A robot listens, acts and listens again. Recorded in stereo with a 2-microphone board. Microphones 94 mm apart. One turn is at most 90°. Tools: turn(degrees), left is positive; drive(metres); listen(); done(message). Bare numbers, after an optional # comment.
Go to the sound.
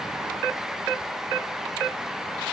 listen()
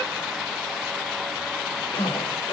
# The zipper: about 65° left or 115° left.
turn(65)
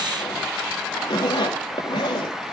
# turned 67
# So it is at 45° left.
turn(45)
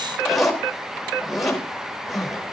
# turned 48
drive(1.0)
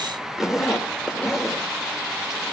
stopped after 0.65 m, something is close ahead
done("Blocked. The zipper is further on, straight ahead.")